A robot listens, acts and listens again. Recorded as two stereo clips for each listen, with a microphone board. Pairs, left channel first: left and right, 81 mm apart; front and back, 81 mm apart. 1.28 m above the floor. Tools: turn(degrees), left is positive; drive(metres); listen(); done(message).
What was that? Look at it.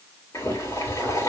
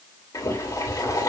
turn(degrees=40)
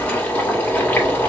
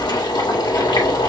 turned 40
turn(degrees=20)
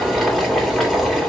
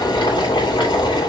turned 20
done("Found it: boiling, straight ahead, 2 to 4 m away.")